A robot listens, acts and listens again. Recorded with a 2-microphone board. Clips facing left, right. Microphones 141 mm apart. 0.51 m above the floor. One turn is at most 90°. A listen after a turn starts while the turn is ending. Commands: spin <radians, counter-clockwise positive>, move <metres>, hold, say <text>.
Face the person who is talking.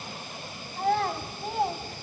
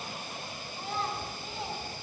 spin 0.96
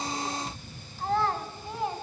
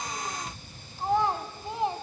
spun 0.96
spin -0.44
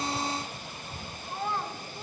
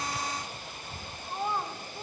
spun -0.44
spin -0.26
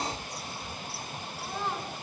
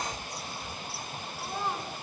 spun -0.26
spin -0.17
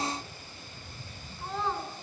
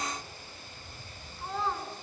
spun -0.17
say Facing the child speaking, 2 to 4 m away.